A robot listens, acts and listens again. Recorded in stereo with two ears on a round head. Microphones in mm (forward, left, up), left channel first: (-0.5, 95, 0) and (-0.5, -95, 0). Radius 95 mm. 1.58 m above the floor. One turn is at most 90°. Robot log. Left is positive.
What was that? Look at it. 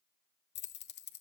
note: The keys jangling: about 50° left or 130° left.
cmd yaw +50
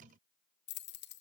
note: So it is at 65° left.
cmd yaw +65
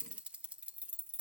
end: Found it: keys jangling, straight ahead, 1 to 2 m away.